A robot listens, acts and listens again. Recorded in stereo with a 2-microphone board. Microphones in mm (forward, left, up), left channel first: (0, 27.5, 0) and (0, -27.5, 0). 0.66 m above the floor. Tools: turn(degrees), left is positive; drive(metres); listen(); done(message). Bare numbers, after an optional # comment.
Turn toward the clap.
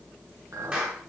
# The clap: about 25° right or 155° right.
turn(-25)
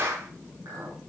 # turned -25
# So it is at 125° right.
turn(-125)
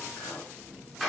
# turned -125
done("Found it: a clap, straight ahead, over 4 m away.")